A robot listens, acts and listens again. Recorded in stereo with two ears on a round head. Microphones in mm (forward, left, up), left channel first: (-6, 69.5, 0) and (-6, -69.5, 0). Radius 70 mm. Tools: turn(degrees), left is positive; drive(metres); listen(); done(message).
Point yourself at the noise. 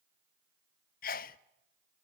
turn(degrees=60)
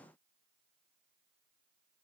listen()
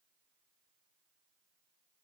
done("I heard a sneeze, but can't make it out now. It was about straight ahead or 60° left.")